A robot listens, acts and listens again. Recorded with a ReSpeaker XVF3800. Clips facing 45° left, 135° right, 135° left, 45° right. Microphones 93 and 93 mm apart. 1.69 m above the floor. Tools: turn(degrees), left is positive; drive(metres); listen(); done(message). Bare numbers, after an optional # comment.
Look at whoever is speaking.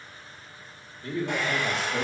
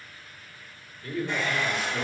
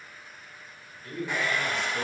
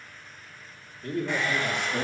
# The man speaking: 10° right.
turn(-10)
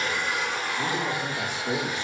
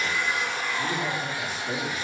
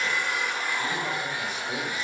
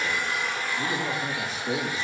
# The man speaking is now 15° left.
turn(15)
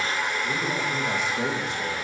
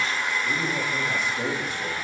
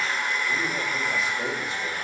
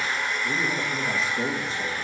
# The man speaking is now 15° left.
turn(15)
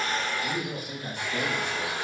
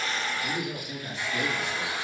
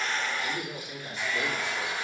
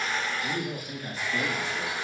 done("Facing the man speaking, 2 to 4 m away.")